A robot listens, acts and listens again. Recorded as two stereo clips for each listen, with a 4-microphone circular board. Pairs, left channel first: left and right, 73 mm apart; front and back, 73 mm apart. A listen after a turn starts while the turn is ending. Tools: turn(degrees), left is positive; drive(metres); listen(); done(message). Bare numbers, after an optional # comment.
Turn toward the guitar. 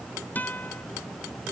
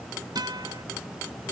# The guitar: 155° left.
turn(155)
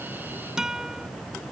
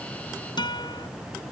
# The guitar is now 10° right.
turn(-10)
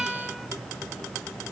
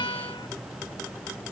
listen()
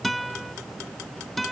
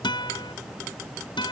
done("Facing the guitar.")